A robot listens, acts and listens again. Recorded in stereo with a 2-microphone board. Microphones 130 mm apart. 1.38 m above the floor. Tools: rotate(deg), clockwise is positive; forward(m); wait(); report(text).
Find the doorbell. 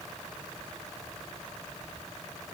wait()
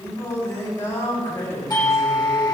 rotate(-30)
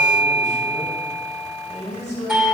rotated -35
report("Found it: a doorbell, straight ahead.")